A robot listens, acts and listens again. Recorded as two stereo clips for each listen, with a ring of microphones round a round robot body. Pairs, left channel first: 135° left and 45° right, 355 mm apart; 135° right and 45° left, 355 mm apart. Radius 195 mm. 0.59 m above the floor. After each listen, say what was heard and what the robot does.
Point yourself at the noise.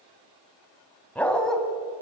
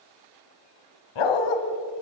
The dog barking: 135° right. Turn 135° right.
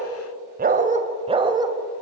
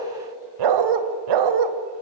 The dog barking is now 35° left. Turn 35° left.
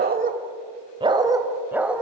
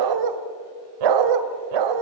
The dog barking is now 40° left. Turn 40° left.
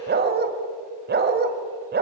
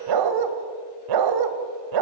The dog barking is now 20° left. Turn 20° left.
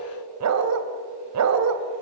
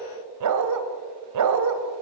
Found it: a dog barking, straight ahead, 1 to 2 m away.